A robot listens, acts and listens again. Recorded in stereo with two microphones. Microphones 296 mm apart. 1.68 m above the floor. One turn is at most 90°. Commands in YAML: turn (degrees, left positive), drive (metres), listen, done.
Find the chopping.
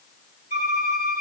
listen: true
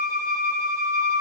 listen: true
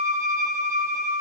done: "I can't make out chopping, only a violin."